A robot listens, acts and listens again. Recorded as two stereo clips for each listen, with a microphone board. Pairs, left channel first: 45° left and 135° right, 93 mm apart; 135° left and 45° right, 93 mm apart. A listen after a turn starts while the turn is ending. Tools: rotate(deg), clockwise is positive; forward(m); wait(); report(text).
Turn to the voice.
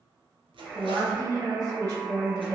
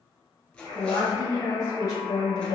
rotate(-180)
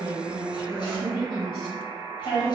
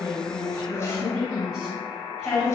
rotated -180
rotate(-40)
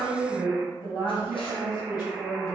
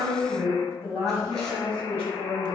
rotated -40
rotate(-15)
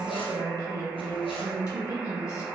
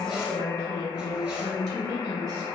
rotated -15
report("Found it: a woman speaking, straight ahead.")